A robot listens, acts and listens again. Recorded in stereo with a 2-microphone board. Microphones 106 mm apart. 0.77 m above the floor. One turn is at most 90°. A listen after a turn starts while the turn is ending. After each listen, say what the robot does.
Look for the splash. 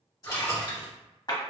Turn 35° left.
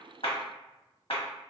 Keep listening.
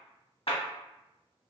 I heard a splash, but can't make it out now. It was about straight ahead or 110° left.